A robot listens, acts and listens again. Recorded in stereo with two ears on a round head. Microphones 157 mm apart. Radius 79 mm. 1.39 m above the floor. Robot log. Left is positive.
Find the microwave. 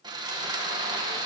cmd idle
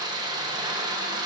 cmd idle
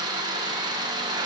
end: I can't make out a microwave to turn to.